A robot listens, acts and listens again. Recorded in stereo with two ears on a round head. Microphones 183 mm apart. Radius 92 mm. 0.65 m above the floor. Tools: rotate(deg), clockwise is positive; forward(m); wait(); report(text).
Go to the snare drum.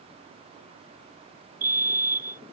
wait()
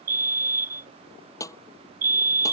rotate(-15)
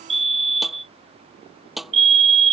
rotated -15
forward(1.0)
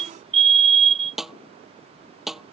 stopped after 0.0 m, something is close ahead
report("Something is in my way. I am facing the snare drum but have not reached it.")